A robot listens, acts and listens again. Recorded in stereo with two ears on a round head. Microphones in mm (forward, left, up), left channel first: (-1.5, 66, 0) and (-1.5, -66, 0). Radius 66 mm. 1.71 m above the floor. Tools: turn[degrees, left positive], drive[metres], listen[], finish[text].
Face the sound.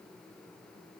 Action: listen[]
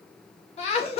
Thought: The laughter: about 40° left or 140° left.
Action: turn[40]
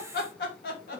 Thought: So it is at 110° left.
Action: turn[110]
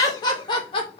Thought: The laughter is now 40° left.
Action: turn[40]
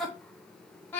Thought: The laughter is now 15° left.
Action: turn[15]
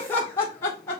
Thought: The laughter is now 15° left.
Action: turn[15]
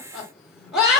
Action: finish[Facing the laughter, 1 to 2 m away.]